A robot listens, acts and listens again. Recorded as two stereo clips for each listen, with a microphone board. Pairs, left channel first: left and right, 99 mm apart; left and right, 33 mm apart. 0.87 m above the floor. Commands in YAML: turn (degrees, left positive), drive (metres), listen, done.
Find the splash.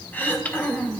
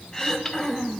listen: true
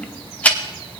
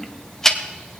listen: true
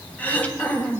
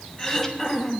done: "I can't make out a splash to turn to."